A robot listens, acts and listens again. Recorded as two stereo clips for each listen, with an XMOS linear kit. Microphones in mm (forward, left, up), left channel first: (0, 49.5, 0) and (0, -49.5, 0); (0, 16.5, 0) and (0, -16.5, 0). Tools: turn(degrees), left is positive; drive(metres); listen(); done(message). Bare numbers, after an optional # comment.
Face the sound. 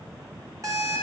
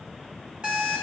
# The alarm clock: about 30° right or 150° right.
turn(-30)
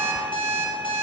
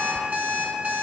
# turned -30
# So it is at 120° right.
turn(-120)
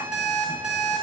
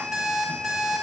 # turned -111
# The alarm clock is now 10° right.
turn(-10)
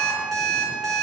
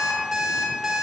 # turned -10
done("Found it: an alarm clock, straight ahead.")